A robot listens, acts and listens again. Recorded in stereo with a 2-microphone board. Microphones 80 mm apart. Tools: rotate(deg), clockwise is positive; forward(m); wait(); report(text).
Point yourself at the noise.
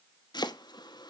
rotate(-60)
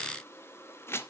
rotate(-35)
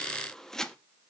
report("Facing the chopping.")